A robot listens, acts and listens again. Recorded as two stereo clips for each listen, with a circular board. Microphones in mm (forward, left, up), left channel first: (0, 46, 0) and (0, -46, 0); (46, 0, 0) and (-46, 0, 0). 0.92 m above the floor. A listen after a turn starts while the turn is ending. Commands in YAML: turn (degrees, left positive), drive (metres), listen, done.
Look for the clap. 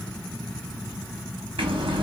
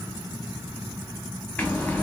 listen: true
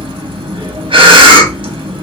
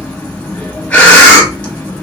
listen: true
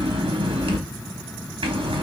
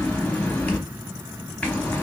done: "I can't make out a clap to turn to."